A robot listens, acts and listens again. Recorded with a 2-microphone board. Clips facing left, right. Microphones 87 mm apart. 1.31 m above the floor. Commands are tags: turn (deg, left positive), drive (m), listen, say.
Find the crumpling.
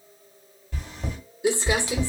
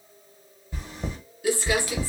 <turn deg="25"/>
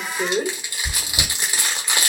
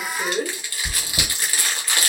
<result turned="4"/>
<turn deg="20"/>
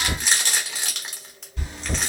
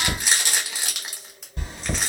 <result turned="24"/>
<say>Facing the crumpling, 1 to 2 m away.</say>